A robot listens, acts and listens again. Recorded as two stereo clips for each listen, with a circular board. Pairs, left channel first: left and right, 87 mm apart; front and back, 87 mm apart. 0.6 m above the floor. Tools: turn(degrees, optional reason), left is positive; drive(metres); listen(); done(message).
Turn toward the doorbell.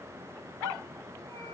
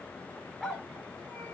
listen()
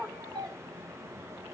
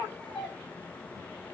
turn(degrees=-100, reason="The doorbell: 100° right.")
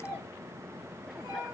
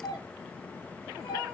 turn(degrees=-35, reason="The doorbell is now 35° right.")
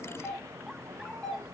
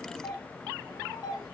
done("Found it: a doorbell, straight ahead, 1 to 2 m away.")